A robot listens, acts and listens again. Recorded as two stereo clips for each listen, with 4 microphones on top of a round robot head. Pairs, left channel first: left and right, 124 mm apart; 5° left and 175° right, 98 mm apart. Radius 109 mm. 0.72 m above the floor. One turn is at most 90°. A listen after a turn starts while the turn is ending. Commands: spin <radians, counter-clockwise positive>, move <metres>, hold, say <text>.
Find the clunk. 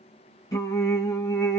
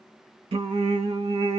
hold
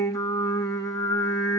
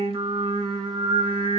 hold
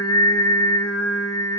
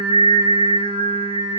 say I can't make out a clunk to turn to.